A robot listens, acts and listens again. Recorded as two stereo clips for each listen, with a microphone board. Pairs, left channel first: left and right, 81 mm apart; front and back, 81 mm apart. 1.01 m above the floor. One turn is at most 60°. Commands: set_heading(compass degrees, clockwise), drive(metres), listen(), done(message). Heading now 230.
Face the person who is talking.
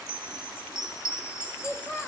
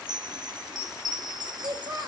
set_heading(170)
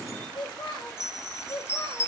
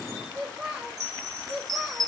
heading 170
set_heading(110)
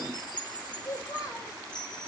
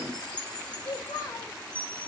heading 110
set_heading(70)
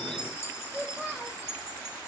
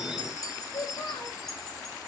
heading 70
done("Found it: a child speaking, straight ahead.")